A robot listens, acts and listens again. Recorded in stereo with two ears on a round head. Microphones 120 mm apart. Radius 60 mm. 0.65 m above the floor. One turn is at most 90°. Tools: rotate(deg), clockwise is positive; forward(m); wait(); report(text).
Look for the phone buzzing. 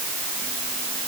wait()
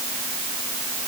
wait()
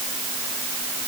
report("I can't make out a phone buzzing to turn to.")